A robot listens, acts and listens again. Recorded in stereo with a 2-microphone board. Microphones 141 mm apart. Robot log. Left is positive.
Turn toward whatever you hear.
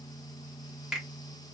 cmd yaw -30
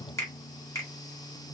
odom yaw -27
note: So it is at 25° left.
cmd yaw +25
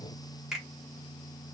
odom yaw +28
end: Found it: a finger snap, straight ahead.